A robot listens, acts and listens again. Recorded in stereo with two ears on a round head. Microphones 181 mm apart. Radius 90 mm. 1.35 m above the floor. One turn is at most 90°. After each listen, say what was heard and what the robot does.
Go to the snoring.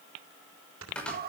Turn 90° right.
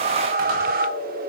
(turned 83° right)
Keep listening.
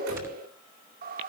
Keep listening.
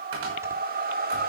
I heard snoring from this way, but can't make it out now. I did not reach it.